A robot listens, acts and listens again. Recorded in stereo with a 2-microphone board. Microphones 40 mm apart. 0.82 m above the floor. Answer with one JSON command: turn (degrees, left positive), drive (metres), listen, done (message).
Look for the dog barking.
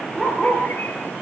{"turn": 30}
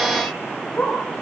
{"turn": 150}
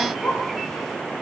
{"turn": 50}
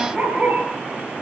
{"turn": 10}
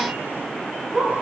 {"done": "Facing the dog barking, over 4 m away."}